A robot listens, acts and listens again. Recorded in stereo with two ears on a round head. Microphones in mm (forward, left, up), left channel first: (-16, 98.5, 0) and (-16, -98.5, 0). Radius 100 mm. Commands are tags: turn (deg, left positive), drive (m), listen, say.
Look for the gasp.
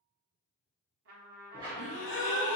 <turn deg="65"/>
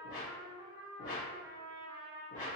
<listen/>
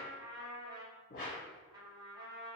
<say>I heard a gasp, but can't make it out now. It was about straight ahead or 50° left.</say>